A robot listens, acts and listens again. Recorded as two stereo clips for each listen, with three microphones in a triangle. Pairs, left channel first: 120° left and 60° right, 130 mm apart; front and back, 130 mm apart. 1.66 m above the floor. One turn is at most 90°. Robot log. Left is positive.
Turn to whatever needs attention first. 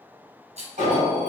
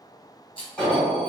note: The alarm: 80° right.
cmd yaw -80
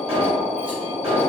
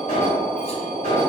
note: The alarm is now 20° right.
cmd yaw -20
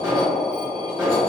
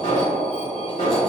end: Found it: an alarm, straight ahead, 1 to 2 m away.